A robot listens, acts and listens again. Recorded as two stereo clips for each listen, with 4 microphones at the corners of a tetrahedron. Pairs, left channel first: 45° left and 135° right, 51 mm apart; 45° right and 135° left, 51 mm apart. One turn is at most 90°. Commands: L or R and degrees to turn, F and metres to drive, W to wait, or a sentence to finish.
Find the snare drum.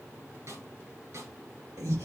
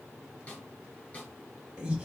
R90
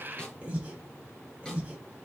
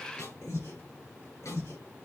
R30
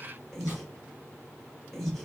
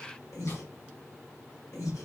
W
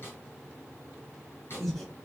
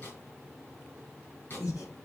Facing the snare drum, 2 to 4 m away.